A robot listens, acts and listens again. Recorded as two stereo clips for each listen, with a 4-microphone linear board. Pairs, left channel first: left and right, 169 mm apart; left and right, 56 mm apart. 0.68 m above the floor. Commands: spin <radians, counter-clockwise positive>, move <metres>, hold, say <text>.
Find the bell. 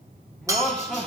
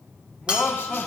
spin -0.35
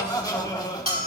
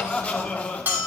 spin -2.44
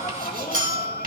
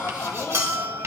spin -1.05
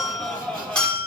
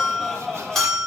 say Facing the bell, 1 to 2 m away.